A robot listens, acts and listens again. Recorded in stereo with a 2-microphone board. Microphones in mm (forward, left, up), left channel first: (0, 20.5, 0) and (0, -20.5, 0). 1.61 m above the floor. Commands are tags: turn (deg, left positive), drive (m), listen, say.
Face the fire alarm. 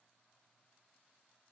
<listen/>
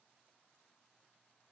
<listen/>
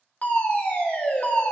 <turn deg="40"/>
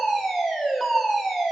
<say>Found it: a fire alarm, straight ahead.</say>